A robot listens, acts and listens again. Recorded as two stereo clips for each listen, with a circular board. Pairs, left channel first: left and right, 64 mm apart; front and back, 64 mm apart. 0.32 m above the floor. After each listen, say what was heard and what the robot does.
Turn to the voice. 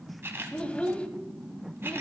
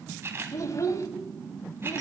The child speaking: 20° left. Turn 20° left.
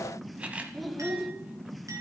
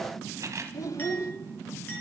Facing the child speaking.